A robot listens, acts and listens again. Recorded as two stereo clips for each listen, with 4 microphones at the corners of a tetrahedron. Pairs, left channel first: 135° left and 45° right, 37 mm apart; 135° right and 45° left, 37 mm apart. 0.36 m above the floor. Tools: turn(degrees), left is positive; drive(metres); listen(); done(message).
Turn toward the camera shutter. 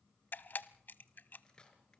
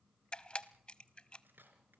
turn(degrees=165)
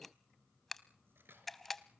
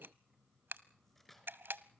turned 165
turn(degrees=50)
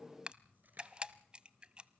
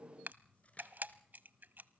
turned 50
turn(degrees=15)
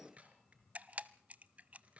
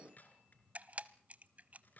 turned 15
done("Found it: a camera shutter, straight ahead.")